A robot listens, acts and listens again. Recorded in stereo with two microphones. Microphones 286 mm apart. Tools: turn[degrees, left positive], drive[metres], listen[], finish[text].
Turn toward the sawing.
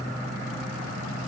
Action: listen[]
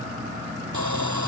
Action: turn[-90]
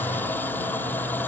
Action: finish[Found it: sawing, straight ahead.]